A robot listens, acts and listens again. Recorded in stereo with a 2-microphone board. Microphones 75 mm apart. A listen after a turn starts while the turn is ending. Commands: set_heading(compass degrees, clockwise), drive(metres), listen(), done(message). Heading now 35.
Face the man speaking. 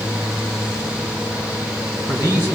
set_heading(65)
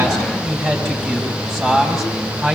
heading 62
done("Found it: a man speaking, straight ahead.")